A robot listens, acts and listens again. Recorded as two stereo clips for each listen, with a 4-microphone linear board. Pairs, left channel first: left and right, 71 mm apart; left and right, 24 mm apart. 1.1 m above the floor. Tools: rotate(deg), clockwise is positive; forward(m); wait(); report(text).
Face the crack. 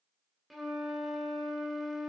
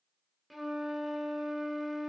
wait()
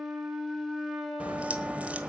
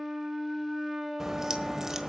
rotate(20)
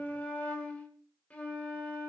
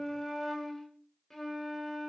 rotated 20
wait()
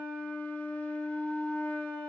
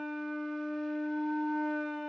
report("I heard a crack, but can't make it out now. It was about straight ahead or 140° right.")